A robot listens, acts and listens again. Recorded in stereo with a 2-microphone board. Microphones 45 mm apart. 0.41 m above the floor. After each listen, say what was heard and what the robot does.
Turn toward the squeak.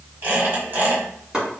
The squeak: about 50° right or 130° right. Turn 50° right.
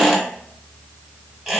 So it is at 10° right. Turn 10° right.
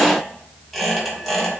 Found it: a squeak, straight ahead, 1 to 2 m away.